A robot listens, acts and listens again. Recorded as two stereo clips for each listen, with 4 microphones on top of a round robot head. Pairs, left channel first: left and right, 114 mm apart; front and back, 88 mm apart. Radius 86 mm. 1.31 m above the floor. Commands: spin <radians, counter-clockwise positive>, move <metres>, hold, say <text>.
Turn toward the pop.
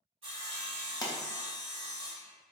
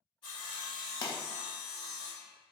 spin 0.61
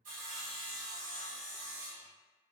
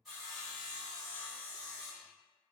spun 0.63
say I heard a pop from this way, but can't make it out now.